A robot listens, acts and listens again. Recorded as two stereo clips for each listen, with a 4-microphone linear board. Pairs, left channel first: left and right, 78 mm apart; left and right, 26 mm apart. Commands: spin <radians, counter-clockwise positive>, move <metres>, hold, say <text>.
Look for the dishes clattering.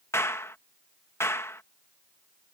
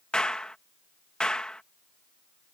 hold
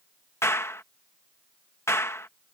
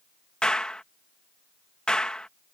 hold
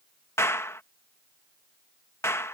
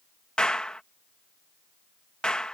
say I can't make out dishes clattering to turn to.